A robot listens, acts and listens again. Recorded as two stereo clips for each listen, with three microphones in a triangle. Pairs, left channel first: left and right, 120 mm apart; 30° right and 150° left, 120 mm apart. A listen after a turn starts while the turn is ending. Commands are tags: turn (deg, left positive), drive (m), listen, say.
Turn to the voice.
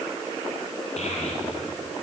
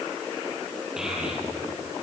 <turn deg="65"/>
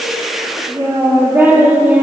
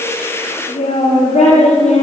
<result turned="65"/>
<turn deg="-15"/>
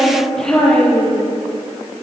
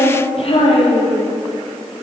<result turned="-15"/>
<say>Found it: a child speaking, straight ahead, over 4 m away.</say>